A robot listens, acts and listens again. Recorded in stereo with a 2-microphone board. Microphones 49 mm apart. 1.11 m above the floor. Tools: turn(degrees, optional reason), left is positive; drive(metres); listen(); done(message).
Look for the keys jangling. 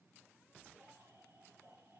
listen()
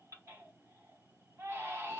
listen()
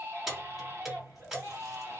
turn(degrees=-30)
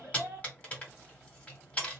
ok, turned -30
turn(degrees=30, reason="So it is at 30° left.")
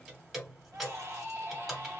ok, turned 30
done("Facing the keys jangling, 1 to 2 m away.")